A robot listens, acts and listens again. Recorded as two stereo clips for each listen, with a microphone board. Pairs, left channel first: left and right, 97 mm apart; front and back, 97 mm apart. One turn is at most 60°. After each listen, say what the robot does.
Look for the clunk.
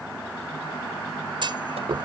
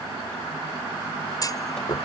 Turn 50° right.
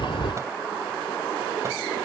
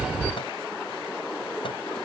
I heard a clunk from this way, but can't make it out now.